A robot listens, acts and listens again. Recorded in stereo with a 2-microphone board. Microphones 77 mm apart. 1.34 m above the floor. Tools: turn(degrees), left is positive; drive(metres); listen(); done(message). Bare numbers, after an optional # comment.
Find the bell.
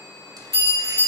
# The bell: about 35° left or 145° left.
turn(35)
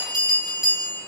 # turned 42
# So it is at 10° right.
turn(-10)
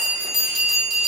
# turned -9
done("Facing the bell, 1 to 2 m away.")